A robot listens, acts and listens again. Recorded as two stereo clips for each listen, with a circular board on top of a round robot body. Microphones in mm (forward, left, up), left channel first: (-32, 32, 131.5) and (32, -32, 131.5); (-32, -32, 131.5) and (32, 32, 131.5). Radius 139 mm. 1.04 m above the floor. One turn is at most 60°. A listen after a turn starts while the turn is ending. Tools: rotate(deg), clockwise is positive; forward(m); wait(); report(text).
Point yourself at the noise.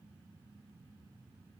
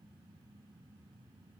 wait()
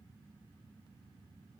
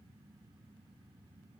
wait()
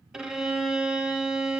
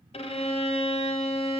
rotate(60)
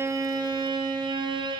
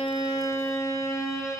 rotate(60)
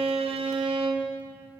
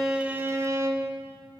rotate(15)
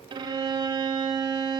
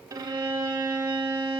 report("Found it: a violin, straight ahead.")